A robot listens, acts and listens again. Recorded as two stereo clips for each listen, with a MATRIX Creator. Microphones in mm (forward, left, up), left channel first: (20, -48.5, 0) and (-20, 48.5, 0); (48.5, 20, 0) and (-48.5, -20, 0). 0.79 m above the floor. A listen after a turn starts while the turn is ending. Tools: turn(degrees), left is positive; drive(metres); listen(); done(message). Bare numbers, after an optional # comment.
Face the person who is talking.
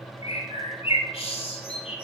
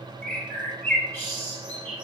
listen()
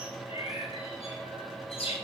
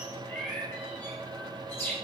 listen()
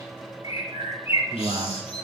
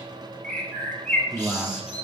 # The man speaking: 115° left.
turn(115)
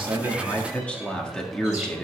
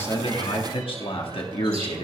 # The man speaking is now 15° left.
turn(15)
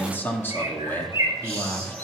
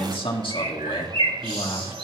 done("Found it: a man speaking, straight ahead, 1 to 2 m away.")